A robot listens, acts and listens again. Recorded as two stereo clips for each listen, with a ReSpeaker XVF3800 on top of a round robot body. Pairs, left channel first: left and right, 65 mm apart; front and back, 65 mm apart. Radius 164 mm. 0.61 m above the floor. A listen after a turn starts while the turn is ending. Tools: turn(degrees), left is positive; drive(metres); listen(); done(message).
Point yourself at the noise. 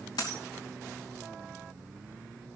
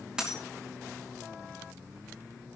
turn(degrees=100)
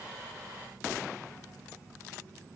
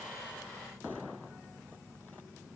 done("I heard a dropped coin from this way, but can't make it out now.")